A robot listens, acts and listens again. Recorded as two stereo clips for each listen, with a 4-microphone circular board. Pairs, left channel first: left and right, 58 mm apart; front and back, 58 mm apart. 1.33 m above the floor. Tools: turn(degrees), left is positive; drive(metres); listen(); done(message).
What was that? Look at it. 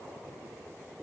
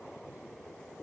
listen()
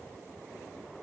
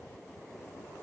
listen()
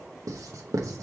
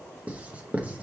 turn(degrees=-115)
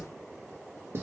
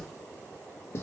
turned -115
turn(degrees=-45)
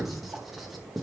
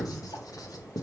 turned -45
done("Facing the writing, under 1 m away.")